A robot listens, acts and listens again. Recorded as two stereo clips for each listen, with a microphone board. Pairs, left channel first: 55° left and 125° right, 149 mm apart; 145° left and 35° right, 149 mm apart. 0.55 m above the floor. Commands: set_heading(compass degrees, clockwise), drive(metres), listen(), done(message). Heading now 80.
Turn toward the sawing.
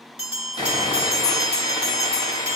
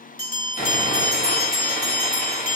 set_heading(320)
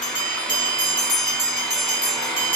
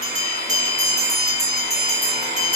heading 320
set_heading(350)
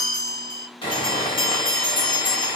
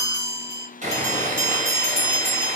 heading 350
done("Facing the sawing.")